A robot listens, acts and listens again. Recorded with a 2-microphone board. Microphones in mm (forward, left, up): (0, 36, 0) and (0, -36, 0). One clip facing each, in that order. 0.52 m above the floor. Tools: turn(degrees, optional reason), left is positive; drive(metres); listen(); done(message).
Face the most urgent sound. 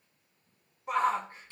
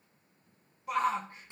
turn(degrees=30, reason="The shout: about 30° left or 150° left.")
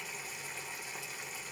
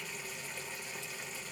listen()
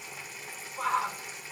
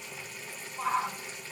turn(degrees=110, reason="So it is at 110° left.")
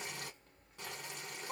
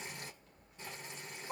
turn(degrees=35, reason="The shout is now 35° left.")
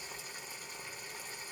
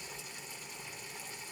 listen()
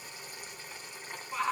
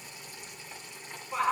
turn(degrees=-10, reason="The shout is now 10° right.")
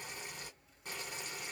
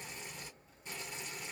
listen()
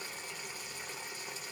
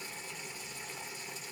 listen()
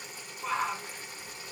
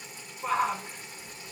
done("Facing the shout.")